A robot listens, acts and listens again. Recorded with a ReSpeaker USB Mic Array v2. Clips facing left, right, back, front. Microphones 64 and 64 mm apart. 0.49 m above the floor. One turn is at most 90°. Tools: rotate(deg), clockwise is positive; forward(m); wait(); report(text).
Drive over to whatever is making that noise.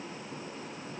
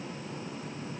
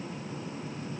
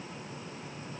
wait()
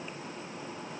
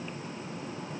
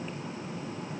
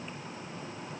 wait()
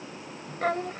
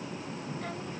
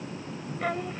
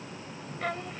rotate(-90)
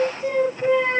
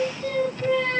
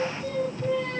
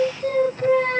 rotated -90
rotate(-25)
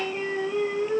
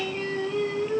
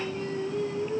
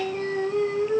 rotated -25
rotate(-15)
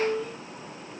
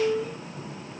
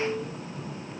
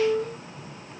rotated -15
forward(1.0)
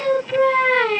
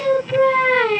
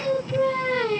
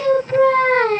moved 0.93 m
forward(1.0)
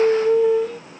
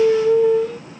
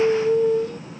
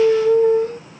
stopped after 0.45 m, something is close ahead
report("I am next to the singing.")